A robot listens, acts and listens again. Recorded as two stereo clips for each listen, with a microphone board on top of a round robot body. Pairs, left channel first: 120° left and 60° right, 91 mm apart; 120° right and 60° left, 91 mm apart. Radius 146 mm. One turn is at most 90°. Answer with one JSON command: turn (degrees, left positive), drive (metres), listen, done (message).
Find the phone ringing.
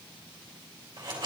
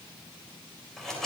{"listen": true}
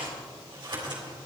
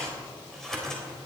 {"listen": true}
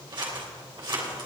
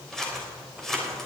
{"done": "I can't make out a phone ringing to turn to."}